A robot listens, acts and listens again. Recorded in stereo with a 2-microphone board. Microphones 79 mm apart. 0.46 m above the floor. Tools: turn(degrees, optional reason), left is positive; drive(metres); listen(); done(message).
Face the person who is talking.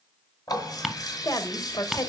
turn(degrees=55, reason="The woman speaking: about 55° left or 125° left.")
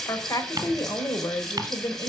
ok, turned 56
turn(degrees=55, reason="So it is at 55° left.")
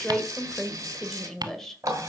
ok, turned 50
done("Facing the woman speaking, 1 to 2 m away.")